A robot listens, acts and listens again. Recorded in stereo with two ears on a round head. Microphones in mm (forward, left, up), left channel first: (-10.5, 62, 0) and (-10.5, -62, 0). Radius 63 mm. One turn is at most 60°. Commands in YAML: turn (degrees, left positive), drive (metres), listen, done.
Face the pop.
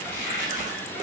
listen: true
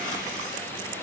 listen: true
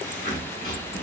done: "I can't make out a pop to turn to."